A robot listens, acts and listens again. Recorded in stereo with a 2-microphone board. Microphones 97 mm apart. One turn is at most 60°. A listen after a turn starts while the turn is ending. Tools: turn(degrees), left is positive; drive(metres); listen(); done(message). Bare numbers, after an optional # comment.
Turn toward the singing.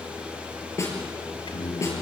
# The singing: about 60° left or 120° left.
turn(60)
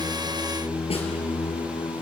# So it is at 65° left.
turn(60)
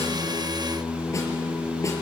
# The singing is now 10° left.
turn(10)
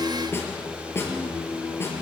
done("Found it: singing, straight ahead, over 4 m away.")